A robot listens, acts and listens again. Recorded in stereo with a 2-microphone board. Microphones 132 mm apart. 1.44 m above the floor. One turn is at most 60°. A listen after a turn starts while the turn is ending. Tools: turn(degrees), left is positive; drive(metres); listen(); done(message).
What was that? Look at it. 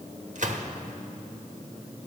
turn(degrees=-60)
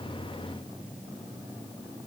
listen()
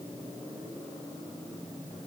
done("I heard a gunshot, but can't make it out now. It was about straight ahead or 60° right.")